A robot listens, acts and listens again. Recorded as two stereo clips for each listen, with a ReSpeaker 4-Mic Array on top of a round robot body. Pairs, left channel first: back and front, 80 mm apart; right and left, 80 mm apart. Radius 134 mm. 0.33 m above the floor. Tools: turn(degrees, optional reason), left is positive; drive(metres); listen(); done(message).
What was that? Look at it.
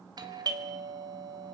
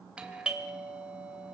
turn(degrees=15, reason="The doorbell: 15° left.")
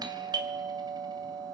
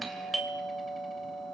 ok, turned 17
done("Facing the doorbell.")